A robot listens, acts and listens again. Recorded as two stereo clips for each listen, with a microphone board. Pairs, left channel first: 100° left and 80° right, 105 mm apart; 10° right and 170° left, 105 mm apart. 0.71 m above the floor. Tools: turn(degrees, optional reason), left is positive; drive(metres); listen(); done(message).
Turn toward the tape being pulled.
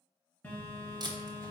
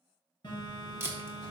turn(degrees=-125, reason="The tape being pulled: 125° right.")
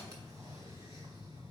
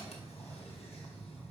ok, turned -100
turn(degrees=-25, reason="Nothing new. It was at 25° right.")
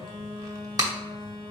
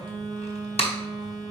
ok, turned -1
turn(degrees=-25, reason="The tape being pulled is now 25° right.")
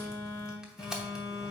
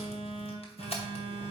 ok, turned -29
done("Facing the tape being pulled.")